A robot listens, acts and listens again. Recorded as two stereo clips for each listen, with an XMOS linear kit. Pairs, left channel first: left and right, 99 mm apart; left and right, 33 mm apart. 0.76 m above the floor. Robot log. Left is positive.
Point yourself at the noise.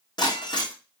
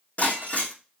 note: The breaking glass: about 45° left or 135° left.
cmd yaw +45
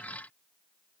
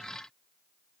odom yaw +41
cmd idle
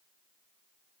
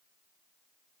end: I heard breaking glass, but can't make it out now. It was about 5° left or 90° left.